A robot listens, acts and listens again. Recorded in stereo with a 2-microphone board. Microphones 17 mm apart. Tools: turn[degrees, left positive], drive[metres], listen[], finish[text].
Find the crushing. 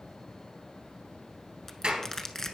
Thought: The crushing: about 20° left or 160° left.
Action: turn[20]
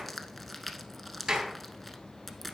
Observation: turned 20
Action: finish[Found it: crushing, straight ahead, under 1 m away.]